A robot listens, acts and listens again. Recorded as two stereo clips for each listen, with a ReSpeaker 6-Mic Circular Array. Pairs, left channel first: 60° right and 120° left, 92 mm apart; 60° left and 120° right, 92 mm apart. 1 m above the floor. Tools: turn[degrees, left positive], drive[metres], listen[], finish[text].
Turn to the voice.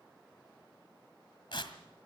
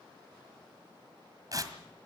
Action: listen[]
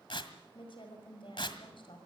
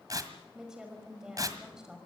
Thought: The woman speaking: 35° right.
Action: turn[-35]
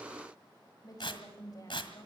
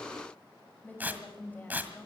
Thought: The woman speaking is now 10° right.
Action: turn[-10]
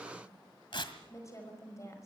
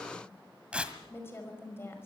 Action: finish[Facing the woman speaking.]